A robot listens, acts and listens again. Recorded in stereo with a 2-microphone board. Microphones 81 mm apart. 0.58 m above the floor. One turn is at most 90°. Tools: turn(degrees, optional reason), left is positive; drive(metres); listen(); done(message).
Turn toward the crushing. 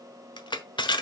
turn(degrees=65, reason="The crushing: about 65° left or 115° left.")
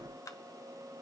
listen()
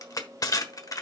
turn(degrees=45, reason="So it is at 45° left.")
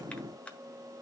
listen()
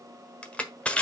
turn(degrees=15, reason="The crushing is now 15° left.")
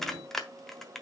done("Found it: crushing, straight ahead, 1 to 2 m away.")